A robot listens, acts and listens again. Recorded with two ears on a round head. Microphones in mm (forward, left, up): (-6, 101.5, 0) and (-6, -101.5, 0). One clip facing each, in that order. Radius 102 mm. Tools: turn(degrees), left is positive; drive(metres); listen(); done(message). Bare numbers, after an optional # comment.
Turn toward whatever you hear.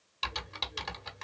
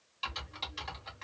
# The typing on a keyboard: about 65° left or 115° left.
turn(65)
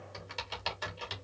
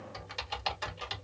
done("Facing the typing on a keyboard.")